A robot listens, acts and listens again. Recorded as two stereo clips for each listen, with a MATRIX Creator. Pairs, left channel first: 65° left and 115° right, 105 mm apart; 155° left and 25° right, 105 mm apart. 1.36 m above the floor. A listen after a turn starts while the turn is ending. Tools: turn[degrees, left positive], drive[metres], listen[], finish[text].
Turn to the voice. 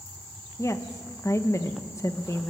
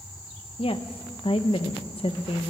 Thought: The woman speaking: 130° left.
Action: turn[130]
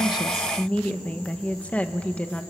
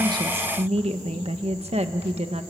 Thought: The woman speaking is now 10° right.
Action: turn[-10]
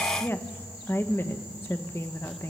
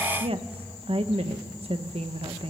Action: finish[Facing the woman speaking, 1 to 2 m away.]